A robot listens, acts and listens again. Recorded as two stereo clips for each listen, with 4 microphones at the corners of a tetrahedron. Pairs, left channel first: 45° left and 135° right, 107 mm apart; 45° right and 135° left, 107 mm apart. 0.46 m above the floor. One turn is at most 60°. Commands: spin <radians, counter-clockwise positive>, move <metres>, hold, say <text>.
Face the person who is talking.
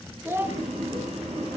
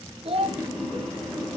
spin 1.05
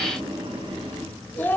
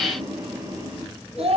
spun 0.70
spin 1.05
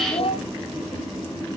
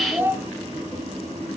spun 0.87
spin 1.05
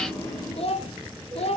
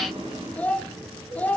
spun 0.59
spin 0.52
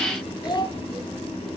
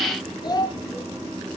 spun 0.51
say Facing the child speaking, 1 to 2 m away.